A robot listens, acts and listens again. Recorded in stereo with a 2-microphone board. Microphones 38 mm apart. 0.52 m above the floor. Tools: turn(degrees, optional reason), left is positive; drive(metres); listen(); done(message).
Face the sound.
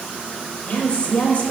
turn(degrees=35, reason="The woman speaking: about 35° left or 145° left.")
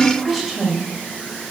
done("Found it: a woman speaking, straight ahead, 2 to 4 m away.")